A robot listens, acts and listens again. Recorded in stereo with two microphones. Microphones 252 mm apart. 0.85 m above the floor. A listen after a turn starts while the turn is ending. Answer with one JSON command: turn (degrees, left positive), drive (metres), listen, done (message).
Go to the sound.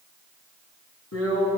{"turn": 70}
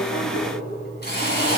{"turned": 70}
{"turn": 40}
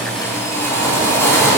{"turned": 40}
{"turn": 10}
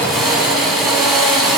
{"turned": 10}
{"drive": 1.0}
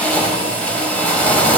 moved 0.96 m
{"drive": 1.0}
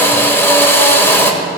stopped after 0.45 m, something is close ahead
{"turn": 10}
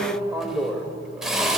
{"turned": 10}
{"done": "I am next to the drill."}